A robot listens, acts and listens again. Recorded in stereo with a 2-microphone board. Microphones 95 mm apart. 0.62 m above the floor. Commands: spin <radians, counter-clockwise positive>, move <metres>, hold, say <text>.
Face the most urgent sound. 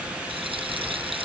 hold
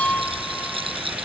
hold
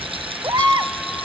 spin -0.79
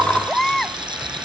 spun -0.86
say Facing the baby crying.